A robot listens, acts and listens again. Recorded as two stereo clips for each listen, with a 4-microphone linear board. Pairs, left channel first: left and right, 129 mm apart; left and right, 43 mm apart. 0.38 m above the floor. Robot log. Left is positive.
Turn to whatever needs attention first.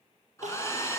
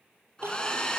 note: The crying: about 70° right or 110° right.
cmd yaw -70
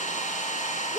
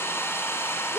end: Facing the crying, 2 to 4 m away.